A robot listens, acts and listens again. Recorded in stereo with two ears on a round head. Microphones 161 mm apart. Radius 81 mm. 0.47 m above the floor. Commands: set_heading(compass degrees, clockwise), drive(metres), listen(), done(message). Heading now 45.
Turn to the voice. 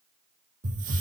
listen()
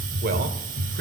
set_heading(100)
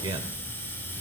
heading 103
set_heading(133)
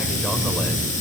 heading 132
listen()
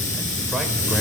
listen()
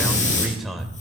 done("Found it: a man speaking, straight ahead, 1 to 2 m away.")